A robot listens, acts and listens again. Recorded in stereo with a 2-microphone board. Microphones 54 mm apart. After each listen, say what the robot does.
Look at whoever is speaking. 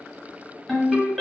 Keep listening.
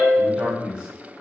Turn 20° right.
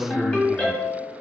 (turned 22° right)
Turn 140° right.
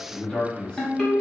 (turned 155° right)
Turn 15° left.
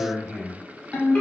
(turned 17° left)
Found it: a man speaking, straight ahead, 1 to 2 m away.